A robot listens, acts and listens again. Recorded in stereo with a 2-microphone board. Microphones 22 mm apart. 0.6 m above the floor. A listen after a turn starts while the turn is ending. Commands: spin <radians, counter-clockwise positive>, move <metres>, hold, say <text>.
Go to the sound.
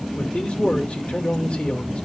spin 1.05
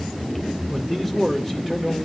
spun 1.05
spin 0.26
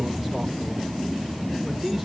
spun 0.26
move 1.0
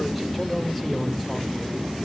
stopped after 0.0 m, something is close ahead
hold
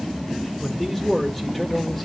spin 0.26
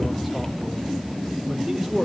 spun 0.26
say Blocked. The man speaking is further on, straight ahead.